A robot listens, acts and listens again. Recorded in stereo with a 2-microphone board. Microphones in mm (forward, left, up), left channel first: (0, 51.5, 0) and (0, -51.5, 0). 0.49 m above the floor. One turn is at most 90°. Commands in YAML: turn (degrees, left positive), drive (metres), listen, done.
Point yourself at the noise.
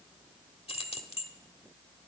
turn: 65
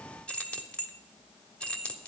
turn: 15
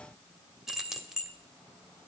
done: "Facing the keys jangling."